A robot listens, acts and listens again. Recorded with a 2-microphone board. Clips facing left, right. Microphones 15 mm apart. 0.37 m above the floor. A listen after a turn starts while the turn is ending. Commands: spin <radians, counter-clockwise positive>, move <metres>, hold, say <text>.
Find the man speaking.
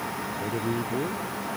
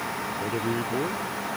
spin -0.44
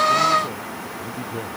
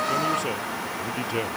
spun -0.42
hold
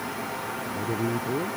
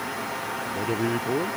spin -2.27
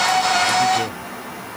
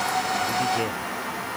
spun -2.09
spin -0.17
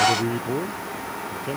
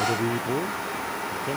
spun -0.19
say Found it: a man speaking, straight ahead.